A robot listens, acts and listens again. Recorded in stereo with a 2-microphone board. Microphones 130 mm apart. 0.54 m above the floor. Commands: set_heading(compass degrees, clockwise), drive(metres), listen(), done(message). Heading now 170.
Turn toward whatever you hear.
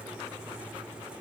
listen()
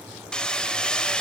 set_heading(140)
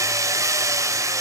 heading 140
set_heading(165)
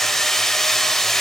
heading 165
done("Found it: hammering, straight ahead.")